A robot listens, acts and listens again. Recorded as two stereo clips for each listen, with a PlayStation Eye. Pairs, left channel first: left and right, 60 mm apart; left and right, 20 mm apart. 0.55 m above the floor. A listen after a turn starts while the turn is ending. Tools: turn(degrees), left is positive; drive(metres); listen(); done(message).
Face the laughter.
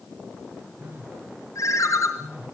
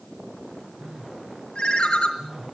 listen()
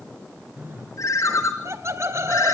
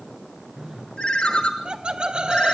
turn(degrees=-55)
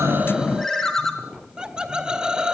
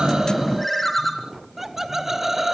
turn(degrees=-15)
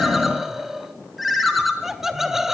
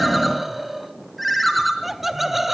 turn(degrees=-10)
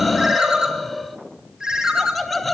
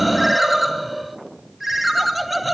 done("Facing the laughter, 1 to 2 m away.")